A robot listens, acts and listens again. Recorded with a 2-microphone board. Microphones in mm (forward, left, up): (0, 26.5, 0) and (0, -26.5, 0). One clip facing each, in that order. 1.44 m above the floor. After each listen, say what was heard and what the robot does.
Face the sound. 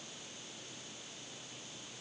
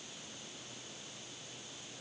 Keep listening.
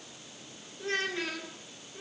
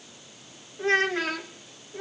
Turn 90° right.
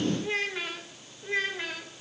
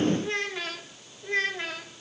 So it is at 10° left. Turn 10° left.
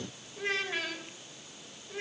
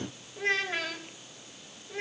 Found it: a child speaking, straight ahead, over 4 m away.